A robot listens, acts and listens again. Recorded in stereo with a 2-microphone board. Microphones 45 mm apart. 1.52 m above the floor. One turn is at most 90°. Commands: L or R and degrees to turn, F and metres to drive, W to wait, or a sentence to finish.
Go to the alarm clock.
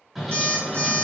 R65
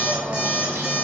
R30
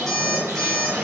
F1.0
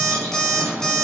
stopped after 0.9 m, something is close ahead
L20
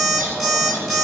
I am next to the alarm clock.